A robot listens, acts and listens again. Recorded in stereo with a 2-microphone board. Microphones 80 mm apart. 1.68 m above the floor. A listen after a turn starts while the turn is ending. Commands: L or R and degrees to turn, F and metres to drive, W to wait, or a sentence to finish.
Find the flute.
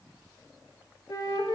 L55
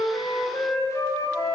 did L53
L45
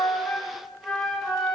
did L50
Found it: a flute, straight ahead.